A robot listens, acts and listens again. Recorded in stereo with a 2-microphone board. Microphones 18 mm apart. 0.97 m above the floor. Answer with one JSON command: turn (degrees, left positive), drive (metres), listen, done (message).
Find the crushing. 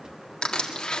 {"turn": 60}
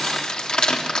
{"turn": 55}
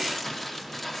{"turn": 10}
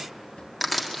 {"done": "Facing the crushing, 1 to 2 m away."}